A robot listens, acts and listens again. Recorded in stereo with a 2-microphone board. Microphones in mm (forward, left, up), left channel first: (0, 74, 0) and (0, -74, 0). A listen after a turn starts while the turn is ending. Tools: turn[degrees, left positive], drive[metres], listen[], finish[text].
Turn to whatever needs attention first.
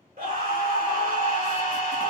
Thought: The scream: about 75° right or 105° right.
Action: turn[-75]
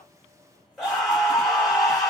Action: finish[Found it: a scream, straight ahead, 2 to 4 m away.]